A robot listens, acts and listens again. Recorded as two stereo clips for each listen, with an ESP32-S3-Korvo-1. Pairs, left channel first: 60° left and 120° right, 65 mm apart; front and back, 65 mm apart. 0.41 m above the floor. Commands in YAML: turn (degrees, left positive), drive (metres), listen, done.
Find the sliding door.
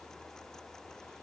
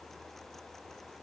listen: true
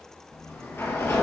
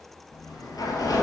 done: "Facing the sliding door."